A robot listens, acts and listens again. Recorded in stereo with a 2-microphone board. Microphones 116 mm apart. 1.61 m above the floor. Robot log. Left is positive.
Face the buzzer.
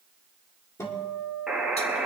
cmd yaw -30
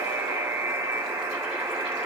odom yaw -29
note: So it is at 145° right.
cmd yaw -145
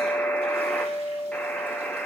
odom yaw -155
note: The buzzer is now 10° left.
cmd yaw +10
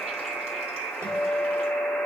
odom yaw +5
end: Found it: a buzzer, straight ahead.